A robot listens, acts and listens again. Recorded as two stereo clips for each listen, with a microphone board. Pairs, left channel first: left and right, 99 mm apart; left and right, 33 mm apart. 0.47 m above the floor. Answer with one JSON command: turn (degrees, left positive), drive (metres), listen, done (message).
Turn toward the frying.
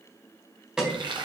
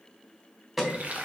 {"turn": -50}
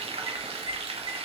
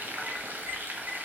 {"turn": -80}
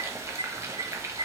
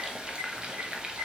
{"turn": -30}
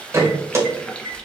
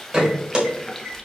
{"turn": 10}
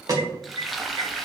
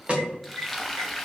{"done": "Found it: frying, straight ahead, under 1 m away."}